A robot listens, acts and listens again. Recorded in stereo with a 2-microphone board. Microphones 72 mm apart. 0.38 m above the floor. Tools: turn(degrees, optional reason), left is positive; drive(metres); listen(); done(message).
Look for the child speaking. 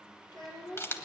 turn(degrees=60, reason="The child speaking: about 60° left or 120° left.")
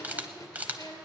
turn(degrees=70, reason="So it is at 70° left.")
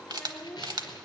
turn(degrees=15, reason="The child speaking is now 15° left.")
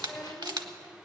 turn(degrees=10, reason="The child speaking is now 10° left.")
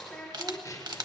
turn(degrees=10, reason="The child speaking is now 10° left.")
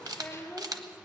done("Facing the child speaking, over 4 m away.")